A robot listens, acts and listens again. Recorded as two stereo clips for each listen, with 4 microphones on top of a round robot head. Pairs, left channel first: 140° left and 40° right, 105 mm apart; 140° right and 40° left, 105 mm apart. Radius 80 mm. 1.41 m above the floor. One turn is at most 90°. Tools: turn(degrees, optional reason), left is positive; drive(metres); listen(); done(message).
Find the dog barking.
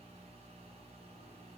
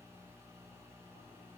listen()
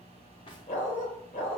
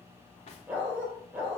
turn(degrees=90, reason="The dog barking: 120° left.")
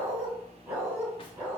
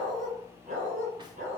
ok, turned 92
turn(degrees=35, reason="The dog barking is now 35° left.")
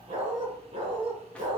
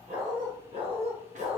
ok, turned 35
done("Found it: a dog barking, straight ahead.")